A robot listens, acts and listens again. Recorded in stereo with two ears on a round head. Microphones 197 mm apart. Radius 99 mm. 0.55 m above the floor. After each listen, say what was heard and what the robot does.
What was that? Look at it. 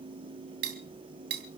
The cutlery clinking: about 50° right or 130° right. Turn 50° right.
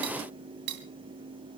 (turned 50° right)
So it is at 80° right. Turn 80° right.
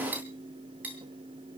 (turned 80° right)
The cutlery clinking is now 10° right. Turn 10° right.
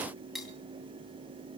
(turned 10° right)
Found it: cutlery clinking, straight ahead.